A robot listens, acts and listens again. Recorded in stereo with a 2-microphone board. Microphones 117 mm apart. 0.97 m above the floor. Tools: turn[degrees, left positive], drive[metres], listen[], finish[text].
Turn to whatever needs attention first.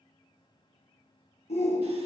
Thought: The shout: about 65° left or 115° left.
Action: turn[65]
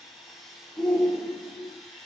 Thought: So it is at 10° left.
Action: turn[10]
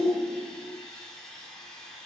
Action: finish[Facing the shout.]